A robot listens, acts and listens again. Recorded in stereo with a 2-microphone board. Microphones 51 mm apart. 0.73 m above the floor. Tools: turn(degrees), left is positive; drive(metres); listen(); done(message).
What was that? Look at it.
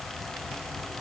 listen()
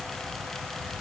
listen()
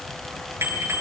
turn(degrees=-55)
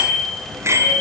turn(degrees=-65)
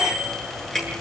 done("Found it: a bicycle bell, straight ahead.")